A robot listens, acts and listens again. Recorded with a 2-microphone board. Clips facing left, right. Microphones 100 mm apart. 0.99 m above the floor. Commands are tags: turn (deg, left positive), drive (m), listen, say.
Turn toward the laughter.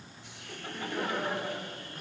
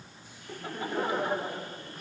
<turn deg="-25"/>
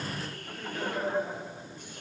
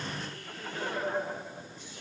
<say>Found it: laughter, straight ahead, 2 to 4 m away.</say>